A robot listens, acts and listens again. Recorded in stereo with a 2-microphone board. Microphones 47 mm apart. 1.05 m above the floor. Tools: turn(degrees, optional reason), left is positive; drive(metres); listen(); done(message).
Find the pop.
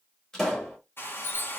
turn(degrees=30)
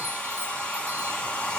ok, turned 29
listen()
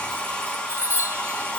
done("I heard a pop, but can't make it out now. It was about 20° right or 140° left.")